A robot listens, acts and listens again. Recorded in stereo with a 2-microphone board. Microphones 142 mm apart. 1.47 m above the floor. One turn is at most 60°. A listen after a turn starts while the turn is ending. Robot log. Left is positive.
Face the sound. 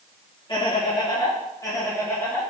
cmd yaw +30
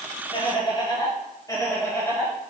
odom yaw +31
cmd yaw +30
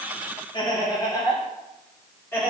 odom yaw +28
note: The laughter: about 15° left or 165° left.
cmd yaw +15
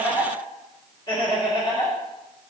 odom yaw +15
note: The laughter: about 30° left or 150° left.
cmd yaw +30
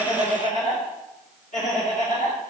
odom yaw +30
note: So it is at 120° left.
cmd yaw +60
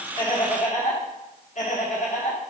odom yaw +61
note: The laughter is now 60° left.
cmd yaw +60
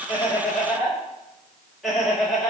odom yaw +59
end: Found it: laughter, straight ahead, 1 to 2 m away.